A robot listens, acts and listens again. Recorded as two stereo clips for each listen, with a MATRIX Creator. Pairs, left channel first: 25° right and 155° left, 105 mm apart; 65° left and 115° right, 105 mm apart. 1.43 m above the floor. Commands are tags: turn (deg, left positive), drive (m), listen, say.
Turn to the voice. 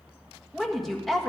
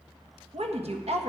<turn deg="-110"/>
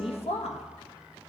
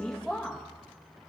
<turn deg="-15"/>
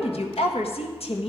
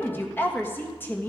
<say>Facing the woman speaking.</say>